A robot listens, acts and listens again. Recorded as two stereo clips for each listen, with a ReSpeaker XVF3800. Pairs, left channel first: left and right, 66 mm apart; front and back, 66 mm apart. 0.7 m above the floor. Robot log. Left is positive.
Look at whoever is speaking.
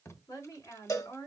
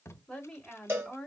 note: The woman speaking: 80° left.
cmd yaw +80
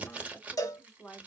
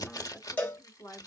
note: The woman speaking is now 15° left.
cmd yaw +15
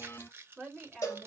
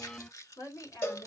end: Facing the woman speaking.